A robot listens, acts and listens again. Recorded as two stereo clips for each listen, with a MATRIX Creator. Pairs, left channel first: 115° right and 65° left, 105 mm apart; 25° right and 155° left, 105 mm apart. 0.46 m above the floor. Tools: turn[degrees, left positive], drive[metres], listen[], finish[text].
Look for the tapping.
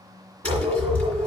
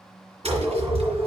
Thought: The tapping: 170° left.
Action: turn[170]
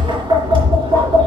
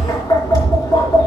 Thought: The tapping is now 30° left.
Action: turn[30]
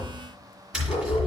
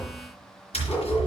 Thought: The tapping is now 15° right.
Action: turn[-15]
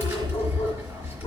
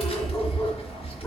Action: finish[Facing the tapping.]